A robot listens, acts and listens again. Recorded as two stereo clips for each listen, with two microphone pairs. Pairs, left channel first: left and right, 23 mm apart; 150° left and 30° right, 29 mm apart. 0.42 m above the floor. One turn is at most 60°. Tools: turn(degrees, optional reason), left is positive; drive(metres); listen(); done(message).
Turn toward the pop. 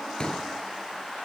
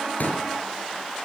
turn(degrees=60, reason="The pop: 135° left.")
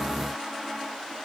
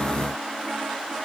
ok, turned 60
turn(degrees=60, reason="Nothing new. It was at 75° left.")
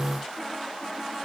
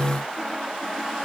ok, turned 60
turn(degrees=15, reason="Nothing new. It was at 15° left.")
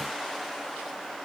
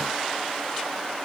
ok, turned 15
done("I heard a pop from this way, but can't make it out now.")